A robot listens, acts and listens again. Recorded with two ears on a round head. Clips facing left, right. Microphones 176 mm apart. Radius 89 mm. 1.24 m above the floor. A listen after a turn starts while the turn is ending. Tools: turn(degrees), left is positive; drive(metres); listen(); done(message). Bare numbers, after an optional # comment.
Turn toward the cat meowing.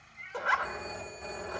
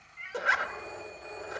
# The cat meowing: about 55° right or 125° right.
turn(-55)
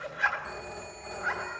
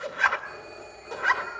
listen()
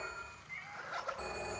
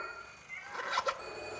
done("Facing the cat meowing.")